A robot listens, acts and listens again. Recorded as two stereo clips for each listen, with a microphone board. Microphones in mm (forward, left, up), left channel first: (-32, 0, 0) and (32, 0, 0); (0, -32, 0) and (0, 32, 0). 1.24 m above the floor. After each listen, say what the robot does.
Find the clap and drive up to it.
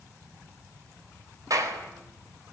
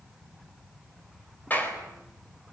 Turn 30° right.
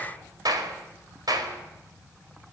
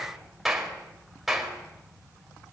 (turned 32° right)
Drive 1.0 m forward.
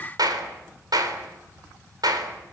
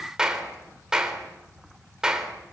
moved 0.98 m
Turn 10° left.
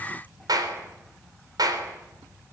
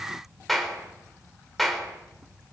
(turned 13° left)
Drive 1.0 m forward.
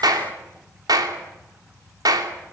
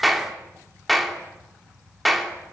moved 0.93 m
Drive 1.0 m forward.
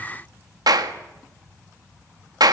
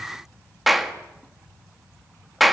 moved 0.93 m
Drive 1.0 m forward.
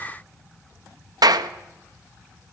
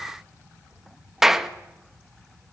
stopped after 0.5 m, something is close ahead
Arrived at the clap, straight ahead.